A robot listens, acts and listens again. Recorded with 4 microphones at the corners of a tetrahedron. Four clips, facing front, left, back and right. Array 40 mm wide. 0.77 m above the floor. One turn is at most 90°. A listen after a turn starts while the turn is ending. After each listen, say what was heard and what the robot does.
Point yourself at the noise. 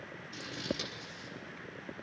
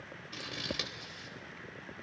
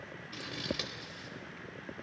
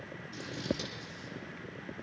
The scissors: 120° left. Turn 90° left.
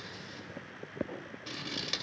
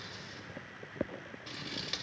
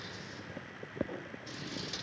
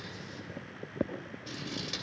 The scissors is now 25° left. Turn 25° left.
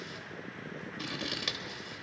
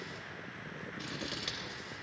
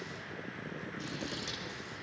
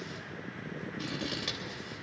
Found it: scissors, straight ahead, 2 to 4 m away.